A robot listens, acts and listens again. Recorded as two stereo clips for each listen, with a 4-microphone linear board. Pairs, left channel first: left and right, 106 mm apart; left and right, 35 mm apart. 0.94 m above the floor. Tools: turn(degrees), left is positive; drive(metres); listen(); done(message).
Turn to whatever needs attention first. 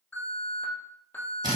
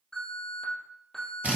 turn(degrees=15)
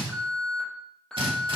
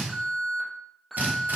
done("Facing the alarm.")